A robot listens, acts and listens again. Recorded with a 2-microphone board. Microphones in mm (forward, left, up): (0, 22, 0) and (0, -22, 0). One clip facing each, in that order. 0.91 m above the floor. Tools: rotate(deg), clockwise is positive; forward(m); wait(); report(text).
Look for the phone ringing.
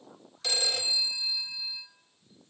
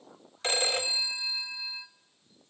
rotate(40)
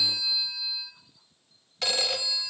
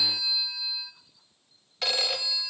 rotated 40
report("Facing the phone ringing, under 1 m away.")